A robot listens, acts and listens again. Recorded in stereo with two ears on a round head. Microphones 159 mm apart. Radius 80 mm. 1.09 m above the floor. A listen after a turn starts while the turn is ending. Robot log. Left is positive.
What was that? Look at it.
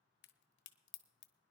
note: The crack: about 65° left or 115° left.
cmd yaw +65
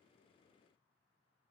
cmd idle
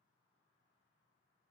end: I heard a crack, but can't make it out now. It was about straight ahead or 50° left.